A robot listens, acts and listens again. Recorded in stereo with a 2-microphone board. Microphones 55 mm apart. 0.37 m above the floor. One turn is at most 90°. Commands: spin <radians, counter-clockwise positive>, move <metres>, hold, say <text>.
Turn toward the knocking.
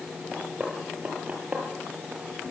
spin -0.44
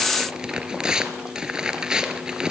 hold
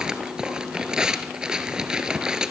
hold
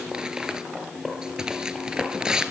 say I heard knocking, but can't make it out now. It was about straight ahead or 130° right.